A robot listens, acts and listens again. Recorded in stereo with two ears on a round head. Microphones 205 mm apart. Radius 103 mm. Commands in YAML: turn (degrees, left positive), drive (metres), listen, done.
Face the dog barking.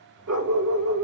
turn: -90
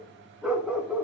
done: "Facing the dog barking, 2 to 4 m away."